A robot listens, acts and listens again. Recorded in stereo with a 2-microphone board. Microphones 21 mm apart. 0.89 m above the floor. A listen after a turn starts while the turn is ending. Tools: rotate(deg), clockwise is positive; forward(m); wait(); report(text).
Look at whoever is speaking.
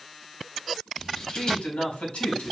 rotate(-90)
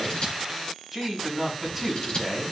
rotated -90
report("Found it: a man speaking, straight ahead.")